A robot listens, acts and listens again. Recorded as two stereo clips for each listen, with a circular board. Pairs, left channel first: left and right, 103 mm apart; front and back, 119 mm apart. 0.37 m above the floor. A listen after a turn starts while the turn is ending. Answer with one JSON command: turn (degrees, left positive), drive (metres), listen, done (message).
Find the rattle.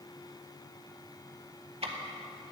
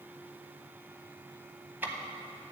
{"listen": true}
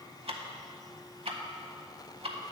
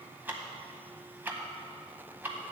{"listen": true}
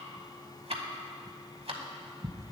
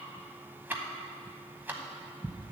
{"done": "I can't make out a rattle to turn to."}